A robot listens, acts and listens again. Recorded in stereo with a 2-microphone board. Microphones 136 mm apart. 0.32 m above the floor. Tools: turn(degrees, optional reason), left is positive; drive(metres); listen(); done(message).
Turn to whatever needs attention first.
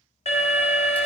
turn(degrees=55, reason="The alarm: about 55° left or 125° left.")
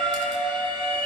turn(degrees=10, reason="So it is at 10° left.")
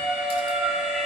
done("Found it: an alarm, straight ahead, 1 to 2 m away.")